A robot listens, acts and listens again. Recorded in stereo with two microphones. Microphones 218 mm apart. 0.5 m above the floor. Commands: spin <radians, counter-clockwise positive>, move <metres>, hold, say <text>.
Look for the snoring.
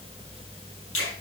hold
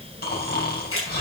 spin 0.79
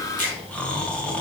say Facing the snoring.